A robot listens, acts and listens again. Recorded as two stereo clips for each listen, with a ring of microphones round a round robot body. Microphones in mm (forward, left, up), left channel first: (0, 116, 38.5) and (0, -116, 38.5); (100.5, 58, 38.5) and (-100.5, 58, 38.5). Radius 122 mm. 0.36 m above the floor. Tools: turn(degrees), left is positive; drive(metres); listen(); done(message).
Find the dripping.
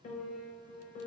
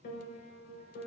listen()
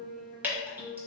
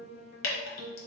turn(degrees=-10)
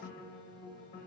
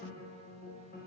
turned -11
listen()
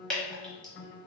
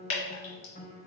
done("Facing the dripping, 1 to 2 m away.")